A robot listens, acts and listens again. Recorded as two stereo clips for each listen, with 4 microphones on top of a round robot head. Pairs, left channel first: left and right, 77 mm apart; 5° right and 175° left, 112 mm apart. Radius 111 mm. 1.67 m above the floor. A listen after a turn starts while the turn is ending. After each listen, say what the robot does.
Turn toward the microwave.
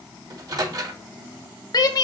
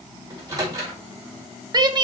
Turn 125° right.
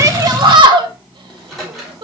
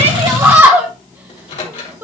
Found it: a microwave, straight ahead.